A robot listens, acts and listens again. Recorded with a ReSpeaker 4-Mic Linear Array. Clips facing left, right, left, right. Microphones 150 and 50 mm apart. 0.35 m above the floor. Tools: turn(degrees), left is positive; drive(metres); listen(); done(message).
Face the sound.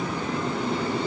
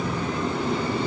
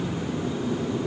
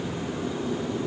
listen()
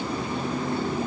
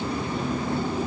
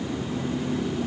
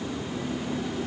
listen()
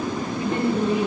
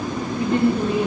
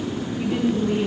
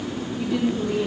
turn(degrees=25)
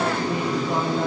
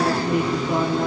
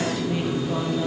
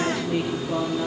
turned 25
listen()
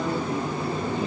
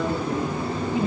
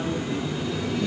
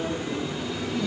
listen()
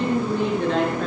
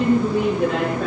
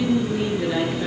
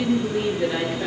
done("Found it: a woman speaking, straight ahead, over 4 m away.")